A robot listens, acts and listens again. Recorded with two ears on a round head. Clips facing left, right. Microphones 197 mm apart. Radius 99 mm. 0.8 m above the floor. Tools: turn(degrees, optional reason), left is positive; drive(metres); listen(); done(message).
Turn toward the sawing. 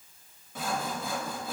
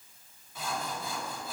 turn(degrees=50, reason="The sawing: about 50° left or 130° left.")
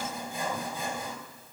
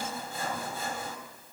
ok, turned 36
turn(degrees=15, reason="So it is at 15° left.")
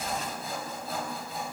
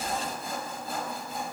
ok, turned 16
done("Facing the sawing.")